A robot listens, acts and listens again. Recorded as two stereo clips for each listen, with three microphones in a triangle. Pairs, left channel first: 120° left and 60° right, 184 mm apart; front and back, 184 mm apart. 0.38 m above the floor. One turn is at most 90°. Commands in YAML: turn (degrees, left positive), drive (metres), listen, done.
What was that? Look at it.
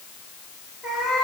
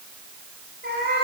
turn: -90
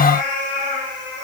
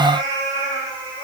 turn: -70
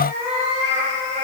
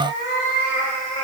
done: "Facing the cat meowing."